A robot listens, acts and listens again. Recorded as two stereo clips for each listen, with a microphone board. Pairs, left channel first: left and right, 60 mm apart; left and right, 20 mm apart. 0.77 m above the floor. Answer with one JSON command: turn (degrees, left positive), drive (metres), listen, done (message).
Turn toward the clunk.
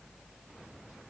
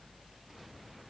{"listen": true}
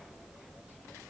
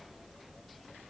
{"listen": true}
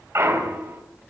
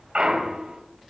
{"turn": -50}
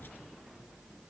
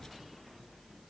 {"listen": true}
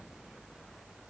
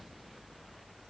{"done": "I heard a clunk, but can't make it out now. It was about straight ahead or 80° right."}